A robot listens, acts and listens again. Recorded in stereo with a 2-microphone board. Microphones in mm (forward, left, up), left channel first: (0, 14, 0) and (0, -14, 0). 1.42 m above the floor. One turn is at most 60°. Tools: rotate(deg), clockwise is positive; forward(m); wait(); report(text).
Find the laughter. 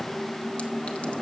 wait()
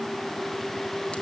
wait()
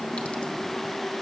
report("I can't make out laughter.")